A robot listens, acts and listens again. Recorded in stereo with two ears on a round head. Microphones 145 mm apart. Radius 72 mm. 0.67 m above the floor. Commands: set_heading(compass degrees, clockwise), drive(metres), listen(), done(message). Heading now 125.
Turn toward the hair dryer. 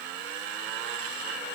listen()
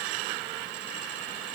listen()
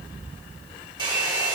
set_heading(155)
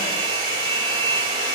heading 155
set_heading(275)
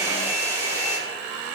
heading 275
set_heading(295)
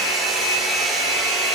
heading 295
done("Found it: a hair dryer, straight ahead.")